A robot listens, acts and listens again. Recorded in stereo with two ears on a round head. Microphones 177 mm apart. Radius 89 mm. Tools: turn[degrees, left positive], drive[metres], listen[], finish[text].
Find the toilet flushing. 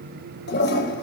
Thought: The toilet flushing: about 55° left or 125° left.
Action: turn[55]
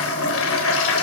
Thought: So it is at 70° left.
Action: turn[70]
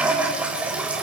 Action: finish[Found it: a toilet flushing, straight ahead.]